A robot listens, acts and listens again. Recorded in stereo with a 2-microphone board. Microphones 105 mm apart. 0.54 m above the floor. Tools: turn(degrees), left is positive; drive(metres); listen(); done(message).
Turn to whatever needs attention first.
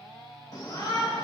turn(degrees=40)
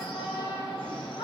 turn(degrees=95)
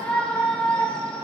turn(degrees=10)
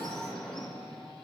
done("Facing the shout.")